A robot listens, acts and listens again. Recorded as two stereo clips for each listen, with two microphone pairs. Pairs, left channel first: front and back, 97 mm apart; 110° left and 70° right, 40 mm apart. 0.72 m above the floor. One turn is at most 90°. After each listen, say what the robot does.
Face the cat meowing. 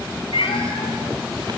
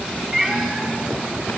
Turn 15° left.
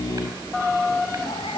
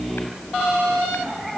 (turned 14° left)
Turn 15° left.
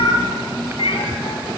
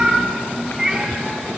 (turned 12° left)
Turn 10° left.
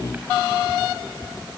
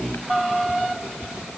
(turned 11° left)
Keep listening.
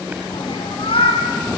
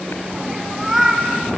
Turn 15° left.
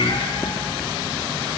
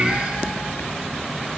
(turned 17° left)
Keep listening.
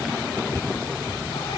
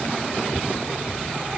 Keep listening.
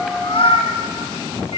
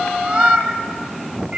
Facing the cat meowing, over 4 m away.